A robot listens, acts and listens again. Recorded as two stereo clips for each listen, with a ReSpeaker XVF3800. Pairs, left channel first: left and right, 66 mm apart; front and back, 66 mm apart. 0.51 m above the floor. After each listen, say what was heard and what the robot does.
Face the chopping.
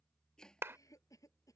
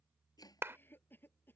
The chopping: 10° left. Turn 10° left.
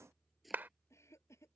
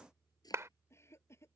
Found it: chopping, straight ahead.